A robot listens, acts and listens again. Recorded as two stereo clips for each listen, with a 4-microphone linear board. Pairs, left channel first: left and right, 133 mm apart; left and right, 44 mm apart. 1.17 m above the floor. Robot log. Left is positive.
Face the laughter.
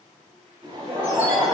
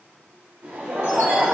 note: The laughter: about 40° right or 140° right.
cmd yaw -40
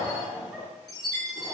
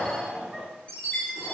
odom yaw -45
note: So it is at 10° right.
cmd yaw -10
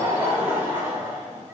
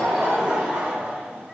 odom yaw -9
note: The laughter is now 25° right.
cmd yaw -25
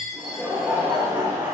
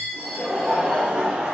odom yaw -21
note: The laughter is now 20° right.
cmd yaw -20
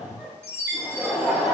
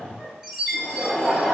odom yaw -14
note: The laughter is now 10° right.
cmd yaw -10
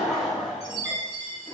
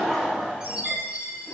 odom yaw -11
end: Facing the laughter.